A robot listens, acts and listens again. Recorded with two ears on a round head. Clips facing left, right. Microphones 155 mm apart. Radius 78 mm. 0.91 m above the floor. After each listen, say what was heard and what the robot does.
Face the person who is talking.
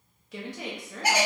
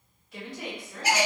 The woman speaking: about 60° left or 120° left. Turn 60° left.
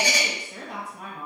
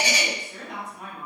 So it is at 35° left. Turn 35° left.
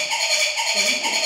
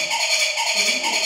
Keep listening.
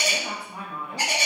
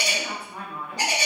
The woman speaking is now 20° left. Turn 20° left.
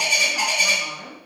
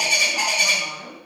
Facing the woman speaking, under 1 m away.